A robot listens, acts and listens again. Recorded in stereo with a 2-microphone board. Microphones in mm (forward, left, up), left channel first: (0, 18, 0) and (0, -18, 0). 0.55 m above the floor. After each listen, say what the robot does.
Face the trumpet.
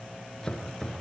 Keep listening.
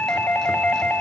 Keep listening.
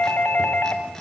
I can't make out a trumpet to turn to.